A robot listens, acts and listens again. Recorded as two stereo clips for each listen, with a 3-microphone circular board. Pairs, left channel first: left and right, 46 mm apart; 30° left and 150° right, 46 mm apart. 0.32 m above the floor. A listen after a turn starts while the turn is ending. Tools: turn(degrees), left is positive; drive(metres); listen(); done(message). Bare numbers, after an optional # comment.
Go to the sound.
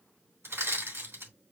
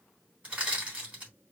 # The crushing: 90° right.
turn(-90)
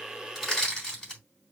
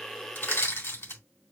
# The crushing is now 15° left.
turn(15)
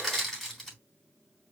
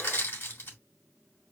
drive(1.0)
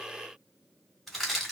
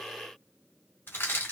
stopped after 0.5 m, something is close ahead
done("Something is in my way. I am facing the crushing but have not reached it.")